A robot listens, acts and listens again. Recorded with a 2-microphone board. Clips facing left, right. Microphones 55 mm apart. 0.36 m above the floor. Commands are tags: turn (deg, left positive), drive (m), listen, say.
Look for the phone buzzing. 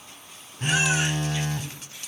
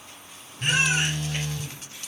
<turn deg="40"/>
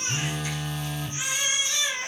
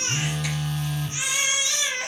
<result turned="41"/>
<say>Found it: a phone buzzing, straight ahead.</say>